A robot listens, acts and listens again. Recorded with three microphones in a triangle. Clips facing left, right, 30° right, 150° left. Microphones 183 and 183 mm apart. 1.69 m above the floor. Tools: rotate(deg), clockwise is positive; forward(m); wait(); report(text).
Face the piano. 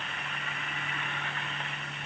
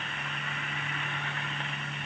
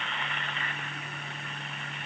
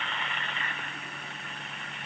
wait()
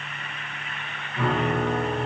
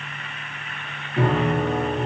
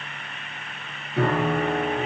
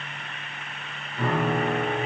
rotate(40)
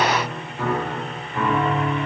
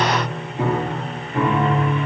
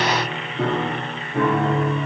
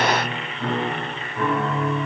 rotate(20)
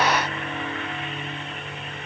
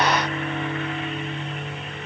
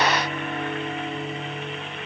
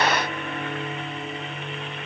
report("Facing the piano.")